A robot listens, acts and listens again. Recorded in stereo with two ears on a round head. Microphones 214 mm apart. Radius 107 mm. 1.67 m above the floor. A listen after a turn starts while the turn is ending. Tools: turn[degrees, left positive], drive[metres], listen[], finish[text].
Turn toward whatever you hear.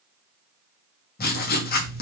Thought: The writing: about 40° left or 140° left.
Action: turn[40]
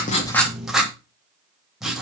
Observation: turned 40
Action: finish[Found it: writing, straight ahead, 2 to 4 m away.]